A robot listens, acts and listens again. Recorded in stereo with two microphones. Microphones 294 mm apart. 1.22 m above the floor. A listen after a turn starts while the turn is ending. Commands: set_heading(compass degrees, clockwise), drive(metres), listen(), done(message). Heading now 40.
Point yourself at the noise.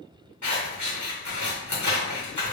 set_heading(325)
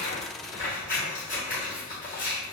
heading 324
set_heading(294)
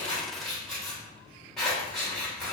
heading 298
done("Facing the scissors.")